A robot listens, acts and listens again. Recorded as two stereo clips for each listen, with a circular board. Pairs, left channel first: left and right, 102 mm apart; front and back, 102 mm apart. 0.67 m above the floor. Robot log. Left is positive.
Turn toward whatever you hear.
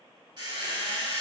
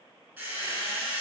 note: The squeak: 110° right.
cmd yaw -110
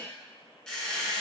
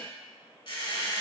note: The squeak is now 10° left.
cmd yaw +10
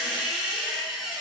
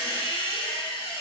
end: Facing the squeak.